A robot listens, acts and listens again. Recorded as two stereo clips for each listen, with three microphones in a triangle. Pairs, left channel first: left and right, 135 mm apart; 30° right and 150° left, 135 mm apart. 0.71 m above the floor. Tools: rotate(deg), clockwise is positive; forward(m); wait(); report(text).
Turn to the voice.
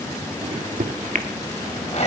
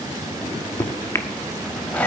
wait()
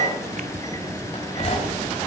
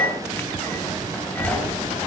rotate(150)
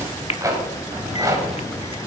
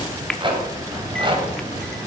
wait()
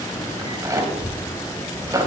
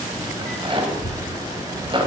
report("Facing the child speaking, over 4 m away.")